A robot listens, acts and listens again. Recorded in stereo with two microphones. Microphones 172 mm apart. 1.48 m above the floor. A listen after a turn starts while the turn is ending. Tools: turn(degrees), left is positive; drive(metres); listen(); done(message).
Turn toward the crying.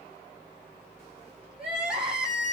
turn(degrees=-30)
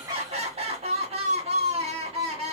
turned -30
turn(degrees=-140)
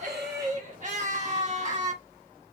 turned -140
turn(degrees=-50)
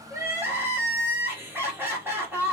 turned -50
turn(degrees=-15)
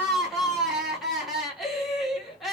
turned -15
done("Found it: crying, straight ahead, 1 to 2 m away.")